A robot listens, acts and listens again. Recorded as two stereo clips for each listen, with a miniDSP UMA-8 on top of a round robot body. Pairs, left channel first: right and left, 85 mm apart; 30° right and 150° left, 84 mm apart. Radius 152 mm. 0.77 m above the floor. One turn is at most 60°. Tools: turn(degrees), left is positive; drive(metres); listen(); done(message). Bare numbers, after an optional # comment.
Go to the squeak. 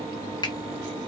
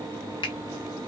listen()
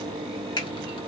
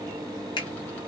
listen()
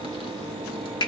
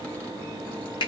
done("I can't make out a squeak.")